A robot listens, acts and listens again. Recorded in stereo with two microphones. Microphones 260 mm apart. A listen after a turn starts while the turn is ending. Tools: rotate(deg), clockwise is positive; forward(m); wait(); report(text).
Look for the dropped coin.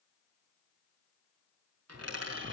rotate(75)
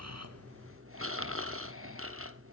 wait()
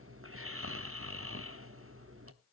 report("I heard a dropped coin, but can't make it out now. It was about straight ahead or 30° right.")